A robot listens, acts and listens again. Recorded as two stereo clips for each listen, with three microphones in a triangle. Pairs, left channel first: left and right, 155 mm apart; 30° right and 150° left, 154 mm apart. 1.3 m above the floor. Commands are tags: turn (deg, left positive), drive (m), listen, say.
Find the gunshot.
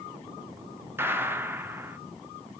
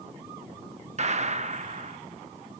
<turn deg="-165"/>
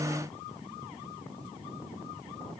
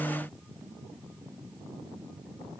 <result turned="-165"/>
<say>I heard a gunshot from this way, but can't make it out now.</say>